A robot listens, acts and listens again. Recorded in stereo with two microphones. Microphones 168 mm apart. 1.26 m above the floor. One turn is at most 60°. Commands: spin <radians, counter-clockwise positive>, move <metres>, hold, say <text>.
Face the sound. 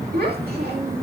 spin -1.05
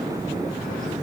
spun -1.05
hold
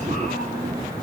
hold
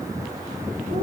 say I heard a child speaking, but can't make it out now. It was about 10° right or 50° right.